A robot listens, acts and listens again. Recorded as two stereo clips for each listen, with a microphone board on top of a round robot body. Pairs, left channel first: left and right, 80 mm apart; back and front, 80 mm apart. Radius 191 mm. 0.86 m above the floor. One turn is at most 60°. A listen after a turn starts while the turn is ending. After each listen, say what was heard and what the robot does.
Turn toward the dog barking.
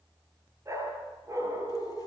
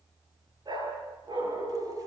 The dog barking: 35° right. Turn 35° right.
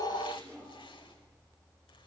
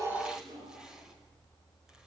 Facing the dog barking, over 4 m away.